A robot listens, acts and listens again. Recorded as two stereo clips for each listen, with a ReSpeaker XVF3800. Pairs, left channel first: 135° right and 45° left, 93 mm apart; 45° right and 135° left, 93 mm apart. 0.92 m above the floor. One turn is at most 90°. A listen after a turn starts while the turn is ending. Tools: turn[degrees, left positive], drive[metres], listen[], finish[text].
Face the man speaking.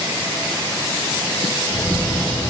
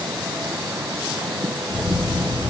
Action: listen[]
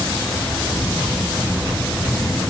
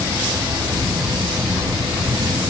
Action: listen[]
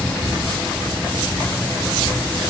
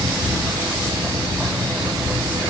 Action: finish[I can't make out a man speaking to turn to.]